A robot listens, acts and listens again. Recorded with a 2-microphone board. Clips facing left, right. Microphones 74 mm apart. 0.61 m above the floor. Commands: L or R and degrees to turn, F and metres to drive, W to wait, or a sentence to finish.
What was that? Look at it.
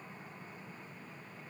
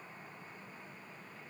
W
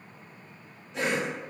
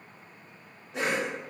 R50
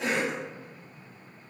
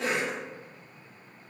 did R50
R70
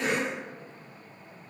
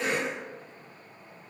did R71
Facing the cough.